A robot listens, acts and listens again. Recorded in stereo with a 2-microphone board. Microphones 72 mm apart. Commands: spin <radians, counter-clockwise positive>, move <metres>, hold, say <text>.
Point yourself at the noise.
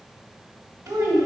spin -0.79
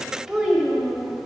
say Facing the child speaking, 1 to 2 m away.